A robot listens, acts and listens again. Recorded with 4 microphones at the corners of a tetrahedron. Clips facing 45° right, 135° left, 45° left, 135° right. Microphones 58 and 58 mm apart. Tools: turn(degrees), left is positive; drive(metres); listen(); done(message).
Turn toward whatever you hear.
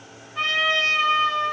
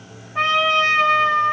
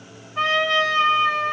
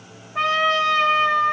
turn(degrees=-170)
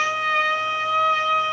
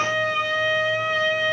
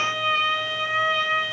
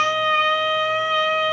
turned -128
turn(degrees=-45)
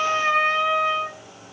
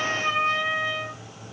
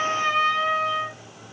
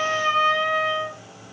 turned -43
done("Found it: a trumpet, straight ahead, 1 to 2 m away.")